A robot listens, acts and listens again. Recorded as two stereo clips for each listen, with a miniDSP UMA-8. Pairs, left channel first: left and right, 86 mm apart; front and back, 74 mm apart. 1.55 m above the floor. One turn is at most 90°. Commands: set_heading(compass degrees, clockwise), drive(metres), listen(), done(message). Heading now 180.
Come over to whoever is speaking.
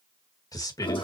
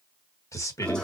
set_heading(135)
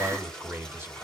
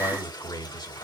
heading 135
set_heading(160)
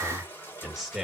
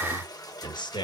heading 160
drive(1.0)
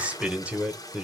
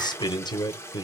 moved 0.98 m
set_heading(175)
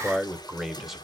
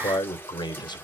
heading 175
drive(1.0)
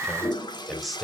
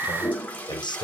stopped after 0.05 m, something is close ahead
done("Arrived at the man speaking, straight ahead.")